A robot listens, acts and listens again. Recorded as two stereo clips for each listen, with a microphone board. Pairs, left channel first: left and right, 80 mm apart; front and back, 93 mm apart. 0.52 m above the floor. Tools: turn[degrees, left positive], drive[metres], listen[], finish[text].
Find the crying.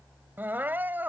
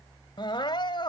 Thought: The crying: 25° right.
Action: turn[-25]
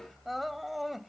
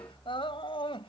Action: finish[Facing the crying.]